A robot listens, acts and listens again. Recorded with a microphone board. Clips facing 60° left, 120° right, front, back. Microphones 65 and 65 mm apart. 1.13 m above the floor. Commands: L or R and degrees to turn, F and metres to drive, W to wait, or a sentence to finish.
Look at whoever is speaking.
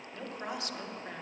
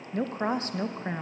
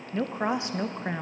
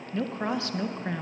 R70
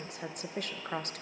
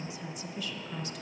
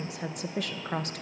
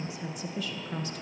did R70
L25
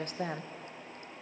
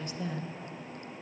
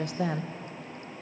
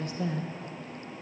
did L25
L20
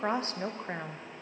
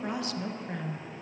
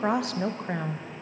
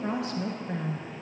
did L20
Facing the woman speaking.